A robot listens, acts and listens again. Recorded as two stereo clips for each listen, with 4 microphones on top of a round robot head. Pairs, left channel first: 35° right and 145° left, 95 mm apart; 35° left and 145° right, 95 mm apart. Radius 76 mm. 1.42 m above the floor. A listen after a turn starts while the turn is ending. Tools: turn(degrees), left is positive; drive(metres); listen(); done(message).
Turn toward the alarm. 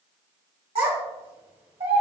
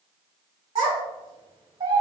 listen()
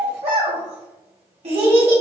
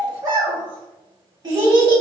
listen()
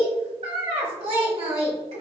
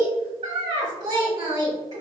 done("I can't make out an alarm to turn to.")